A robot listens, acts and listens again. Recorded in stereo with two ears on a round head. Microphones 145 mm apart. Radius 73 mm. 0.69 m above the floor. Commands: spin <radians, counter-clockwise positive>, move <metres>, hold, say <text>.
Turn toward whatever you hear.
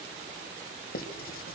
spin 1.05
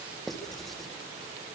say Found it: writing, straight ahead, 2 to 4 m away.